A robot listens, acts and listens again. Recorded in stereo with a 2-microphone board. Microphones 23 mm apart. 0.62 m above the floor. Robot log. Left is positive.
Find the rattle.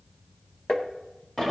cmd idle
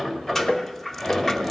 cmd yaw +30
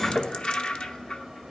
note: So it is at 140° left.
cmd yaw +140
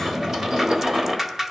note: The rattle is now 10° right.
cmd yaw -10
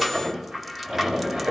end: Found it: a rattle, straight ahead.